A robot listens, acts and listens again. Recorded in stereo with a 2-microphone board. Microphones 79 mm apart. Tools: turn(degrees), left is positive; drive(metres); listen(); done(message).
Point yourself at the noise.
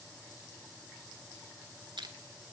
turn(degrees=-90)
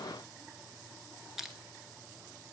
done("Found it: crushing, straight ahead.")